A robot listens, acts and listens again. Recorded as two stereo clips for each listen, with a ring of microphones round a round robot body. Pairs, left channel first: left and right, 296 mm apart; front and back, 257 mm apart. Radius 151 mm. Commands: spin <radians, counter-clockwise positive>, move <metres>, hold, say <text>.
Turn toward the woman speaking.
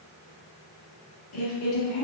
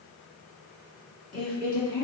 spin 0.96
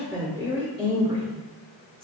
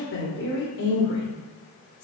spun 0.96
spin -0.26
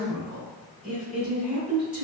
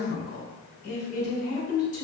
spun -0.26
say Facing the woman speaking, 2 to 4 m away.